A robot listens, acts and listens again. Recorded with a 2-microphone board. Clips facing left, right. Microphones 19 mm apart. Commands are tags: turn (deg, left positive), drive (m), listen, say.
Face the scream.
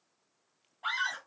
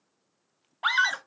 <turn deg="-35"/>
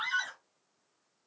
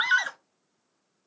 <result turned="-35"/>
<turn deg="-105"/>
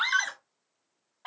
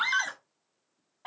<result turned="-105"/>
<say>Facing the scream.</say>